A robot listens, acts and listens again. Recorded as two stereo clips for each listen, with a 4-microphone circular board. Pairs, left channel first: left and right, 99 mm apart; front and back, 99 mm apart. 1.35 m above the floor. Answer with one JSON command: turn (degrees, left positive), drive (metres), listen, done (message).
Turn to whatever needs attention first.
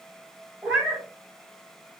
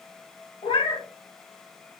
{"listen": true}
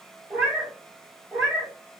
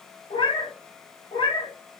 {"listen": true}
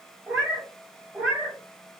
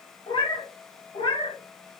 {"done": "I can't make out anything urgent, only a cat meowing."}